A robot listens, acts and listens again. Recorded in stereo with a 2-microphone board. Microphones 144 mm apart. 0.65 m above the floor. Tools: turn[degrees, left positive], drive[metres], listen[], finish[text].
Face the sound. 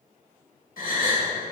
Action: turn[90]
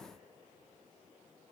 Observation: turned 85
Action: finish[Facing where the gasp came from. I can't hear it now.]